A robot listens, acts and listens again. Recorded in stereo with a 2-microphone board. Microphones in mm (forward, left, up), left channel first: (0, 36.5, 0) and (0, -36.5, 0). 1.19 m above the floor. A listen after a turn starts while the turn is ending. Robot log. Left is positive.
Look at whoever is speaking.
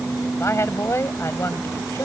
note: The woman speaking: about 40° left or 140° left.
cmd yaw +40
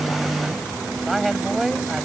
end: Found it: a woman speaking, straight ahead.